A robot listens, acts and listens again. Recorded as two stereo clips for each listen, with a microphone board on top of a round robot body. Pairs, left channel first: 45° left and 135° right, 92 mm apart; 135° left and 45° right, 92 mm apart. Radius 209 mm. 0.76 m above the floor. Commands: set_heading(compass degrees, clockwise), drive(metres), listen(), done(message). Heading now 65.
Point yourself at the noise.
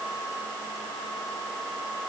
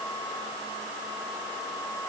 listen()
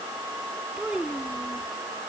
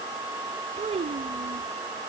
set_heading(120)
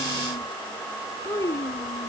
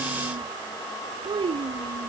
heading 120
set_heading(135)
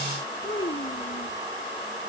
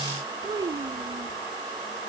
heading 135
done("Found it: a child speaking, straight ahead.")